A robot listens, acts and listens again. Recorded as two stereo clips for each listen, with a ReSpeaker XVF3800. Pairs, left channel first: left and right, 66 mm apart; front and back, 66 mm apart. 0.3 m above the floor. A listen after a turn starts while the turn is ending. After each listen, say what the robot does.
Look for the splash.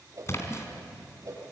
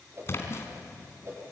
Turn 45° left.
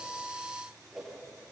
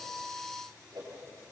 Facing where the splash came from. I can't hear it now.